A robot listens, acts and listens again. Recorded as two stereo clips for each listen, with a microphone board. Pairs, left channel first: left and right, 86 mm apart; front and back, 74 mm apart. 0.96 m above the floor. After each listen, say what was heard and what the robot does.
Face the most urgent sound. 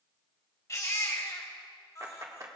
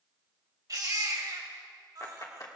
The baby crying: 145° left. Turn 145° left.
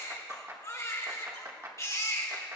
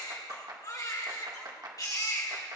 The baby crying is now 35° left. Turn 35° left.
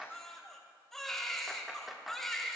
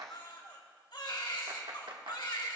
Facing the baby crying.